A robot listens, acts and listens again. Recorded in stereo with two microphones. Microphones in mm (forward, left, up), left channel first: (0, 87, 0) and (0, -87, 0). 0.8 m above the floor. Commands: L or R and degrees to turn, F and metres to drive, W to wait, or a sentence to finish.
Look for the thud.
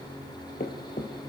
L60
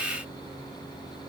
W
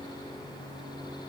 I heard a thud, but can't make it out now. It was about straight ahead or 60° left.